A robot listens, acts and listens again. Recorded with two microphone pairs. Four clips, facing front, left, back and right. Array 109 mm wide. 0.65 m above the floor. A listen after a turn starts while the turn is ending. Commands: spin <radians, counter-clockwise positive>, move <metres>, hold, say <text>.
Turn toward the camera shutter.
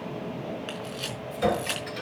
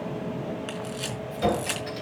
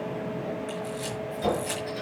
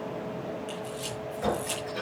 spin 1.05
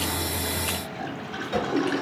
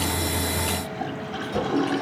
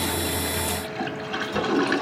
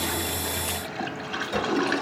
hold
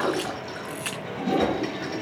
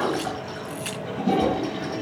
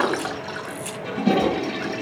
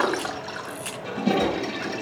say Facing the camera shutter.